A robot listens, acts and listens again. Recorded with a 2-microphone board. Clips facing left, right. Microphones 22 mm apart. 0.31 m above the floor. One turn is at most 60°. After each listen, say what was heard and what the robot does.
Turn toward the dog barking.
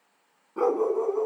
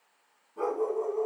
The dog barking: about 55° left or 125° left. Turn 55° left.
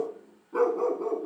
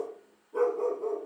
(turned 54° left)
So it is at 70° left. Turn 60° left.
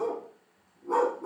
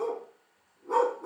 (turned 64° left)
Found it: a dog barking, straight ahead.